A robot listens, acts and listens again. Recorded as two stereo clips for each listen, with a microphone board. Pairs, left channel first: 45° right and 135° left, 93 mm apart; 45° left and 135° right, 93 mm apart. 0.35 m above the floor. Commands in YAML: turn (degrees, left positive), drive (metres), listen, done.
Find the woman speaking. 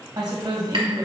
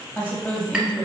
turn: 105
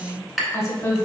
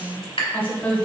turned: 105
turn: -20
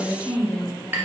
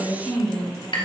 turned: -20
turn: -45
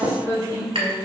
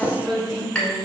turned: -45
turn: -45
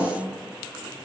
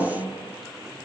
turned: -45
done: "Found it: a woman speaking, straight ahead, 1 to 2 m away."